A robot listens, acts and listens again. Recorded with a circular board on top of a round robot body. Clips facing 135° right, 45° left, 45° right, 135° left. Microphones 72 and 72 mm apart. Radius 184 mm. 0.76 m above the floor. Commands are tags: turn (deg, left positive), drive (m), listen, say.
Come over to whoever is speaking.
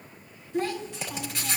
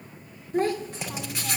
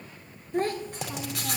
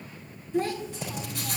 <drive m="1.0"/>
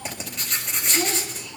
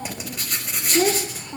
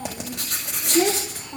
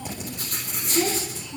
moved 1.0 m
<drive m="1.0"/>
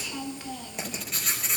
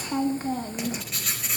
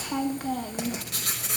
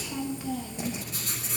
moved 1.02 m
<turn deg="-10"/>
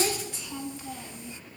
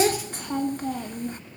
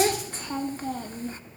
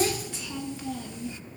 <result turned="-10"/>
<drive m="1.0"/>
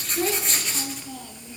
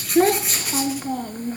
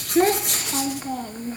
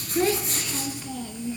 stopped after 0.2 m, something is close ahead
<say>I am next to the child speaking.</say>